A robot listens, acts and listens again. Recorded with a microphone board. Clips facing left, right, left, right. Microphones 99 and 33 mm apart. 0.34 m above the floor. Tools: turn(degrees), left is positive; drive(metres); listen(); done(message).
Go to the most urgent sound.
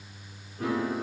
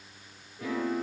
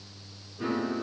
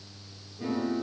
listen()
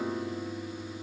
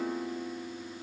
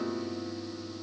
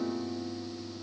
listen()
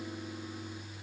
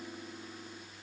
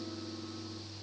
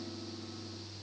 done("I can't make out anything urgent, only a piano.")